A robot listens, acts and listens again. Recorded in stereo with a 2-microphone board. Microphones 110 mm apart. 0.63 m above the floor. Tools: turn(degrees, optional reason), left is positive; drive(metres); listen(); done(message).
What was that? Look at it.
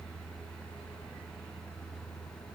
listen()
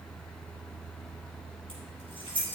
turn(degrees=50, reason="The keys jangling: about 50° left or 130° left.")
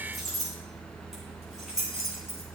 done("Found it: keys jangling, straight ahead, over 4 m away.")